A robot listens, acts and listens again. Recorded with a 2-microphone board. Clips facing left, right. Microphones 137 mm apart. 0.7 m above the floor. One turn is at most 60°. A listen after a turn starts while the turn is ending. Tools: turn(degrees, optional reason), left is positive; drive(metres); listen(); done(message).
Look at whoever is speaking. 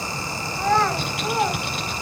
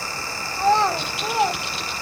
turn(degrees=-20, reason="The child speaking: about 20° right or 160° right.")
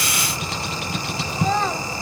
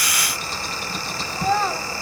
done("Found it: a child speaking, straight ahead.")